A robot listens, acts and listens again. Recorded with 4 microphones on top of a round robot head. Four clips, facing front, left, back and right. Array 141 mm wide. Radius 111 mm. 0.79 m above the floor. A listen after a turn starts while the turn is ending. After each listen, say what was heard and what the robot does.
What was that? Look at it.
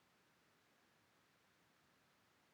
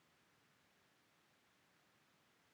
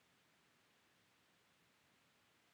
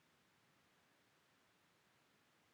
Keep listening.
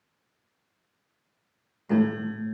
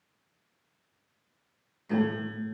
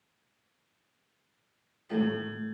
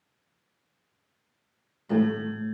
The piano: 25° right. Turn 25° right.
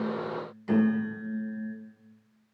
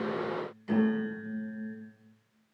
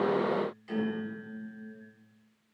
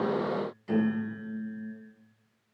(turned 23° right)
Facing the piano.